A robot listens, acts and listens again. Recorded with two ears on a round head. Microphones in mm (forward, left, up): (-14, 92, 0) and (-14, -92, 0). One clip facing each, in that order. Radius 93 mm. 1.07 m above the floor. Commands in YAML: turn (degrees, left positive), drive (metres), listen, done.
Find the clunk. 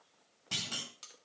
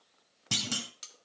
turn: -60
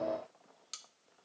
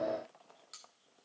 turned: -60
listen: true
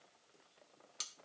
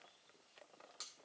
done: "I heard a clunk, but can't make it out now. It was about straight ahead or 60° right."